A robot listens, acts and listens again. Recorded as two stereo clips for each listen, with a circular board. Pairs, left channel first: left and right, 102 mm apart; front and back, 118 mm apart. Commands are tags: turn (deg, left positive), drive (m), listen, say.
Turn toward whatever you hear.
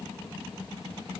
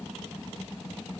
<listen/>
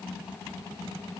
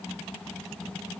<listen/>
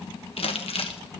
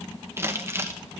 <turn deg="110"/>
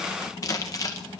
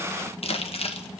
<turn deg="35"/>
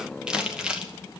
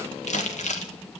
<turn deg="-10"/>
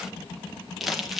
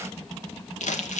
<say>Facing the crumpling.</say>